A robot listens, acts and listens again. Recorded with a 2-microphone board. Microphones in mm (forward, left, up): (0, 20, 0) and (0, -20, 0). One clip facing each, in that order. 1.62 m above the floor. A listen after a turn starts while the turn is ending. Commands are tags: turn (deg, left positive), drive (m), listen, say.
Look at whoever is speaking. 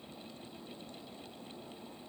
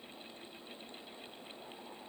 <listen/>
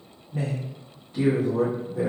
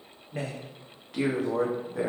<turn deg="-70"/>
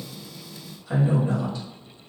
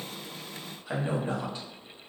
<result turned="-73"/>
<turn deg="-35"/>
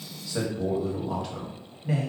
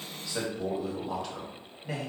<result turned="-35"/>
<say>Facing the man speaking.</say>